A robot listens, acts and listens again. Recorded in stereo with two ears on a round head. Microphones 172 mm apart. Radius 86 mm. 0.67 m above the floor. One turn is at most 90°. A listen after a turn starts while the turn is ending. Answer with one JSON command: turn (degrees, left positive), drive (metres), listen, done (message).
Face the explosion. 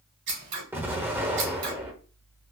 {"turn": -30}
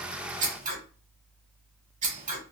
{"listen": true}
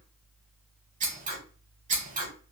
{"done": "I heard an explosion, but can't make it out now. It was about 20° left or 140° right."}